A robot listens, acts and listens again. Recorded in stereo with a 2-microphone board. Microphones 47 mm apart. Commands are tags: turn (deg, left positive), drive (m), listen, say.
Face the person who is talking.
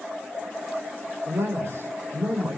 <turn deg="-65"/>
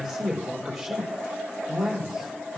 <say>Found it: a man speaking, straight ahead.</say>